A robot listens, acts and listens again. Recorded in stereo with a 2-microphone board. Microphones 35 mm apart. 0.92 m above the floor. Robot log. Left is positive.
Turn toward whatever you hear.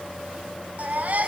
note: The baby crying: about 45° right or 135° right.
cmd yaw -45
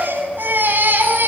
note: So it is at 90° right.
cmd yaw -90
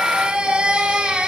note: The baby crying is now 30° right.
cmd yaw -30
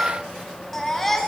end: Facing the baby crying, over 4 m away.